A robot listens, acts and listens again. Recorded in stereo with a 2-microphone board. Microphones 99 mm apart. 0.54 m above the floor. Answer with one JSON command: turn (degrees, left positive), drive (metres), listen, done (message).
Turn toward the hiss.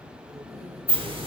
{"turn": -65}
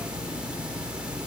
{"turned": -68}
{"turn": -15}
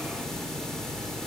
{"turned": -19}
{"done": "Facing the hiss, under 1 m away."}